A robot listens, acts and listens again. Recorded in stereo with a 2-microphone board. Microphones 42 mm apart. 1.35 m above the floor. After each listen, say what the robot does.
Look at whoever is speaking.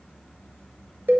Keep listening.
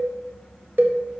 Keep listening.
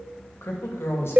Turn 90° left.
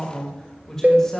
Turn 15° left.
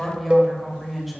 Found it: a woman speaking, straight ahead, 2 to 4 m away.